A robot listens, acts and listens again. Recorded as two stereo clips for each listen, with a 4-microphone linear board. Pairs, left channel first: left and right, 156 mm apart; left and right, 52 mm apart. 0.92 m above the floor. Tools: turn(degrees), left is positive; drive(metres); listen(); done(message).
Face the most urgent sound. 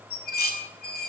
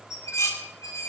listen()
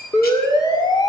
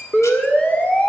turn(degrees=30)
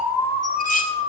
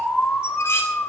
turn(degrees=125)
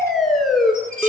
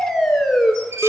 done("Found it: a siren, straight ahead, 2 to 4 m away.")